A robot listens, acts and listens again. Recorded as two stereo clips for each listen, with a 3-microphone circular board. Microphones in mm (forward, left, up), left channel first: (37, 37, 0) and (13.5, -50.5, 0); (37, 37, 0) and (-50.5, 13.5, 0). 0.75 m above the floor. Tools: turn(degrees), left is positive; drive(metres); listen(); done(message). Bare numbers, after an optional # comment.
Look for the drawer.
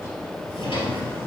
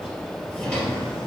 # The drawer: 90° left.
turn(90)
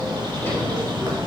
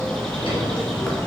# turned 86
listen()
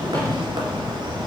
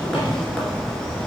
listen()
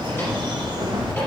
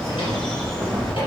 done("Found it: a drawer, straight ahead.")